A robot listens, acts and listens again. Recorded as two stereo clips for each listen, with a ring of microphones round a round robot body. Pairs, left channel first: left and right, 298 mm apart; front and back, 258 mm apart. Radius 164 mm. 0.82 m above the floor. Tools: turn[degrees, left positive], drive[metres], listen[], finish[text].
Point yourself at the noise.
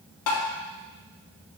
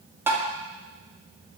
Thought: The tapping: 100° left.
Action: turn[100]
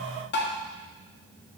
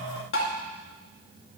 Thought: The tapping is now 35° left.
Action: turn[35]
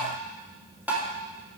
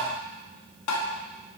Action: finish[Found it: tapping, straight ahead, 2 to 4 m away.]